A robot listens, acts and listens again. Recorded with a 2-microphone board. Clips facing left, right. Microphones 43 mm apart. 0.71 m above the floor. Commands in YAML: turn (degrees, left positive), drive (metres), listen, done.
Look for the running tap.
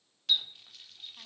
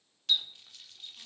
turn: 30
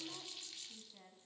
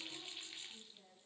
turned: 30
turn: -25
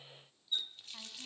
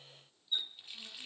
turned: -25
turn: -15
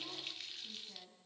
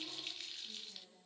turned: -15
done: "Found it: a running tap, straight ahead, under 1 m away."